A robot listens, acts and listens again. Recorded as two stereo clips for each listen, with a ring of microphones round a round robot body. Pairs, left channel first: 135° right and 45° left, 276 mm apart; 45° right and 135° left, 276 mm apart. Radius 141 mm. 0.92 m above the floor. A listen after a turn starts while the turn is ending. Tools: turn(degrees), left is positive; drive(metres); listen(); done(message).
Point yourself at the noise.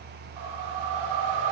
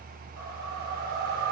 turn(degrees=75)
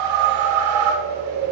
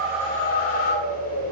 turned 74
done("Found it: a whoosh, straight ahead.")